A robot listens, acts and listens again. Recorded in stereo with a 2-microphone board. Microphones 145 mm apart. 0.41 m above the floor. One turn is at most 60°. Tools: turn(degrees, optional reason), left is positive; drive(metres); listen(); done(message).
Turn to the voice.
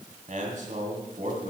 turn(degrees=-60, reason="The man speaking: about 65° right or 115° right.")
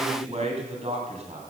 turn(degrees=-55, reason="So it is at 55° right.")
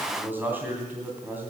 turn(degrees=-15, reason="The man speaking is now 15° right.")
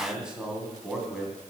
done("Facing the man speaking.")